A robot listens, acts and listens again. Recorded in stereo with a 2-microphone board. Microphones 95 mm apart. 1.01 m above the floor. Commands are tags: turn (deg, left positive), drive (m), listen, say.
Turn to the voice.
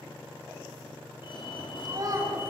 <turn deg="-40"/>
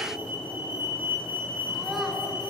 <listen/>
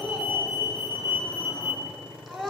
<say>Facing the child speaking.</say>